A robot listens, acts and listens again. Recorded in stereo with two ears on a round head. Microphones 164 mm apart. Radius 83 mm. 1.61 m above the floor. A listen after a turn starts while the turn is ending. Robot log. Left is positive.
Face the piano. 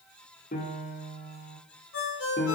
note: The piano: about 50° left or 130° left.
cmd yaw +50
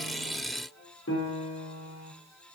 note: So it is at 80° left.
cmd yaw +80
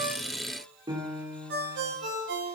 note: The piano is now 20° right.
cmd yaw -20
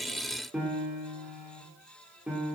end: Facing the piano.